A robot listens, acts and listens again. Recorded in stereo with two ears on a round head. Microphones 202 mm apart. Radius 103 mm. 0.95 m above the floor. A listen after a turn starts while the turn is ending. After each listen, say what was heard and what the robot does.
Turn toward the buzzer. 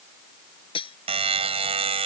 The buzzer: about 25° right or 155° right. Turn 25° right.
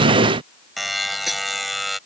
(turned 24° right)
Found it: a buzzer, straight ahead.